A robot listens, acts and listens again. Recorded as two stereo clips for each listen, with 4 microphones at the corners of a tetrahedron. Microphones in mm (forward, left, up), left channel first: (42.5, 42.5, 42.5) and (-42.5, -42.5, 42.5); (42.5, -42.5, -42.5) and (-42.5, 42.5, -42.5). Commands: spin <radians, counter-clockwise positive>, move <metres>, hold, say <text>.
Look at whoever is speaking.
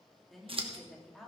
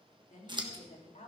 spin -0.70
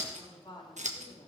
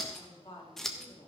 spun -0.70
say Facing the woman speaking.